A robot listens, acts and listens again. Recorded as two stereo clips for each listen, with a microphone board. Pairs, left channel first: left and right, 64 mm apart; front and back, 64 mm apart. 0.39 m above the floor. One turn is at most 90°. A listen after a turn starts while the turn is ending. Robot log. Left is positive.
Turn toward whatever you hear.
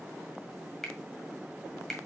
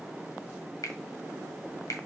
end: Facing the finger snap.